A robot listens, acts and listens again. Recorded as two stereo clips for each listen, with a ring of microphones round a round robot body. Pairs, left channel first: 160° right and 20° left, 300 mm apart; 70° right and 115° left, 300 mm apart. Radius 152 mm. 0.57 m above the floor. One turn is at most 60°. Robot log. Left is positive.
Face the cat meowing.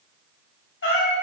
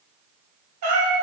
note: The cat meowing: 145° left.
cmd yaw +60
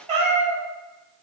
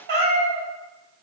note: The cat meowing is now 90° left.
cmd yaw +60
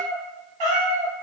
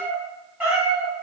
note: The cat meowing is now 25° left.
cmd yaw +25
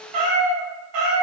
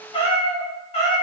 end: Facing the cat meowing.